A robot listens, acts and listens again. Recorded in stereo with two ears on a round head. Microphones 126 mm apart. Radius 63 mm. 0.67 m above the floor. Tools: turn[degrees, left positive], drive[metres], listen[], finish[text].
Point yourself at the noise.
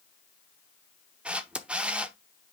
Action: turn[-30]
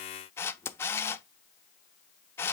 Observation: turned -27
Thought: So it is at 15° left.
Action: turn[15]
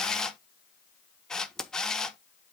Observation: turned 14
Action: finish[Facing the camera shutter, under 1 m away.]